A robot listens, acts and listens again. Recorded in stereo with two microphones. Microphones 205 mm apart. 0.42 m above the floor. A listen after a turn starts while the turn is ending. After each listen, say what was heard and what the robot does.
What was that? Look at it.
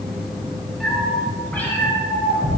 The cat meowing: about 20° left or 160° left. Turn 20° left.
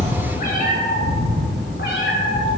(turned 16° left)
So it is at 110° left. Turn 110° left.
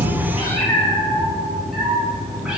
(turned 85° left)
Found it: a cat meowing, straight ahead.